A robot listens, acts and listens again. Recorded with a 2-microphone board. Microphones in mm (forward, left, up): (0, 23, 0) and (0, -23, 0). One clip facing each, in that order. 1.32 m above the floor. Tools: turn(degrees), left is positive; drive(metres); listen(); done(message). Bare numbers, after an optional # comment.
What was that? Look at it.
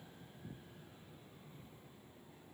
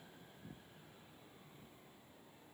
listen()
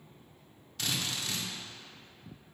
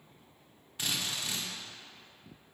# The drill: about 20° right or 160° right.
turn(-20)
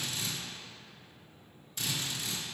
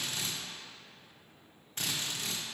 # So it is at 135° right.
turn(-135)
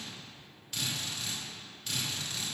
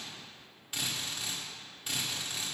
# The drill is now 20° right.
turn(-20)
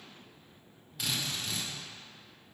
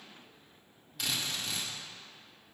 done("Found it: a drill, straight ahead, 1 to 2 m away.")